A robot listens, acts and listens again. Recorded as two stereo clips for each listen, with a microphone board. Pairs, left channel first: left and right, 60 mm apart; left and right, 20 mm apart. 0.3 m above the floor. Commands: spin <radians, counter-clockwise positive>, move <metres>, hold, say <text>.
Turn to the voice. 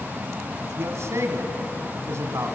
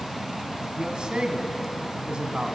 spin -0.87
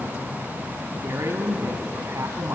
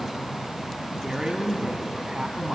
spin -1.22
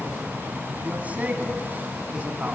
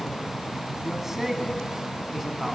spin -0.52
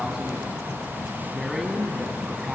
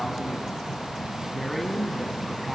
say Found it: a man speaking, straight ahead.